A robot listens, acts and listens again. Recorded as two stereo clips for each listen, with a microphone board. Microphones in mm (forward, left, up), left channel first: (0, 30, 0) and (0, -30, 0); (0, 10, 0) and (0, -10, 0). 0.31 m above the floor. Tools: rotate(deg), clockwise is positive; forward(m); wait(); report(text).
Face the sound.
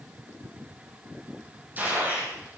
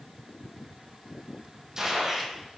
rotate(30)
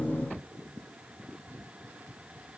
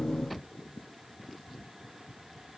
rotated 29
wait()
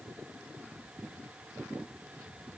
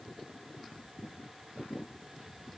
report("I heard a gunshot, but can't make it out now. It was about straight ahead or 120° right.")